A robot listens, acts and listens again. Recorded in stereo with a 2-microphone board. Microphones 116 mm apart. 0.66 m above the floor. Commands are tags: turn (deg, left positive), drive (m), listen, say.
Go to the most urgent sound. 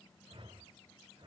<listen/>
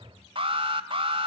<turn deg="-50"/>
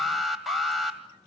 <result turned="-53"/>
<drive m="1.0"/>
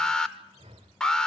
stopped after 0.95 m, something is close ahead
<say>I am next to the alarm.</say>